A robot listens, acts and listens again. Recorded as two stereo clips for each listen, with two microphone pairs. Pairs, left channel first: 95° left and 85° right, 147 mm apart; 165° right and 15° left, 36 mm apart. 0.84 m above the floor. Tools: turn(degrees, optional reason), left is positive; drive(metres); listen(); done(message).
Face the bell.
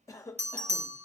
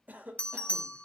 turn(degrees=-115, reason="The bell: 115° right.")
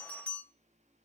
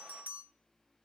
turn(degrees=15, reason="The bell is now 15° left.")
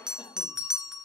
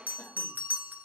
done("Found it: a bell, straight ahead.")